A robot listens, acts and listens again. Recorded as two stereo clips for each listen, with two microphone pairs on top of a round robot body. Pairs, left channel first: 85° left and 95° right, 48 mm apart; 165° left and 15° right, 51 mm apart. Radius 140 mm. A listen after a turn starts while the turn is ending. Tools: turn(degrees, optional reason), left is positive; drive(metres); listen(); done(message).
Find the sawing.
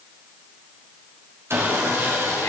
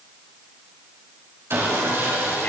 turn(degrees=-60, reason="The sawing: 60° right.")
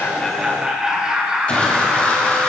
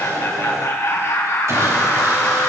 listen()
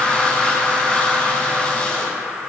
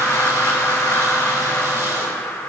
turn(degrees=20, reason="The sawing is now 20° left.")
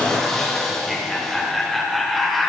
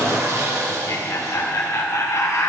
done("Found it: sawing, straight ahead, 2 to 4 m away.")